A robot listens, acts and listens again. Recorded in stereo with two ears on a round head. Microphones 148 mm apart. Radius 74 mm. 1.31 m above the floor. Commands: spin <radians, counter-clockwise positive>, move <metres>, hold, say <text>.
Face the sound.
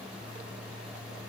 hold
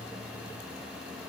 hold
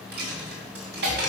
spin -1.22
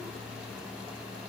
hold
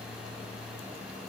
say I heard a dropped coin, but can't make it out now. It was about straight ahead or 40° right.